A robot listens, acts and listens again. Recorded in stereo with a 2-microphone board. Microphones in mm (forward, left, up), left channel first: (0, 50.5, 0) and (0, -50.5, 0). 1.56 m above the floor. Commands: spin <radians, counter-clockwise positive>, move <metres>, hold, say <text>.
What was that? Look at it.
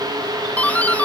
spin 0.26
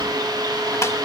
hold
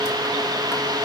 hold
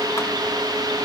say I heard a doorbell, but can't make it out now. It was about straight ahead or 150° left.